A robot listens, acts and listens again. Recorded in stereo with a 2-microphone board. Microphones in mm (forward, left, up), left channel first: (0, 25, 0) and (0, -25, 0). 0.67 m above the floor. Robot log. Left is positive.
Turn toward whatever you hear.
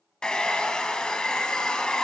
note: The hair dryer: about 15° left or 165° left.
cmd yaw +15
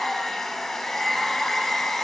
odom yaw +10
cmd yaw +30
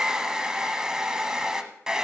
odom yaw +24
note: So it is at 15° right.
cmd yaw -15
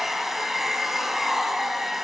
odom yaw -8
end: Found it: a hair dryer, straight ahead, 1 to 2 m away.